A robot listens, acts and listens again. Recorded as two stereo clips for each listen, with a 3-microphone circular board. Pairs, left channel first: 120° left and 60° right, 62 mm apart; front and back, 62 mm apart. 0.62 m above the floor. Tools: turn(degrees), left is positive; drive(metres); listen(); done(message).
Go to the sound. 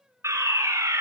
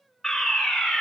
turn(degrees=-80)
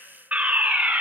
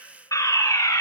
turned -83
drive(metres=1.0)
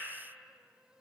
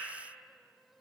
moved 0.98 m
listen()
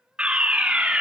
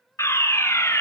drive(metres=1.0)
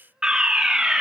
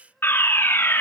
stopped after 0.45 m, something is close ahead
turn(degrees=10)
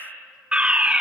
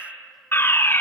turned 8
done("Arrived at the fire alarm, straight ahead.")